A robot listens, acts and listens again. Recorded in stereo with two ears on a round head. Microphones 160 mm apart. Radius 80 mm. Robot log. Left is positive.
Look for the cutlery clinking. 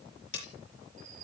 note: The cutlery clinking: about 70° left or 110° left.
cmd yaw +70
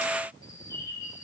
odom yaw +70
cmd idle
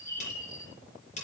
note: So it is at 40° left.
cmd yaw +40
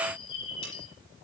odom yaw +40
cmd idle
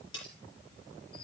note: The cutlery clinking is now 25° left.
cmd yaw +25
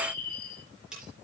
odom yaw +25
end: Found it: cutlery clinking, straight ahead.